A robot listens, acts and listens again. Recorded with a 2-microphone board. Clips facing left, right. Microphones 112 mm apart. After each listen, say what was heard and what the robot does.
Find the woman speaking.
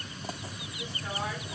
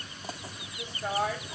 The woman speaking: about 70° right or 110° right. Turn 70° right.
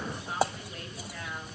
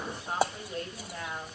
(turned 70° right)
So it is at 35° right. Turn 35° right.
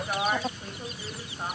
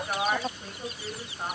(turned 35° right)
Facing the woman speaking, 2 to 4 m away.